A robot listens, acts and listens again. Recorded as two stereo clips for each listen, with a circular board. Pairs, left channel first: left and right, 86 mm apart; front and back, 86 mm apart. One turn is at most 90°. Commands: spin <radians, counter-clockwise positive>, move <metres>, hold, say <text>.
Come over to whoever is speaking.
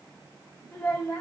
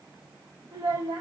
spin 1.57
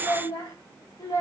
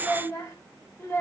spin 0.96
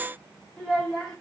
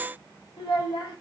move 1.0
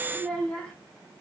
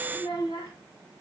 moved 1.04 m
spin 0.17
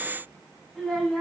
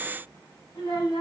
move 1.0
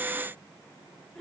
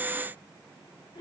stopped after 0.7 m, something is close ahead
say I am next to the child speaking.